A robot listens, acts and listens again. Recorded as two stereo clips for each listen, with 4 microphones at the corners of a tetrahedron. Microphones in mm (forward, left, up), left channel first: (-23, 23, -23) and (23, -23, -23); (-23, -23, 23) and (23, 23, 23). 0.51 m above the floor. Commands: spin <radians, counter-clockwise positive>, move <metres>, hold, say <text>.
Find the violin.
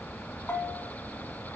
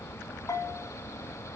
hold
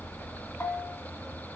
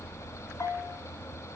hold
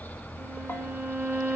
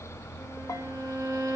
spin 0.26
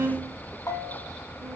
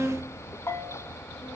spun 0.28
say Found it: a violin, straight ahead.